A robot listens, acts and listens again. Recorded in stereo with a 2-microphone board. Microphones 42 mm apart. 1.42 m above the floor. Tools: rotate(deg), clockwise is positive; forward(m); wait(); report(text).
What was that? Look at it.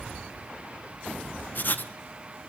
rotate(-50)
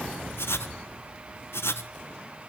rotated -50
rotate(-80)
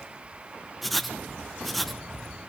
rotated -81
report("Found it: writing, straight ahead.")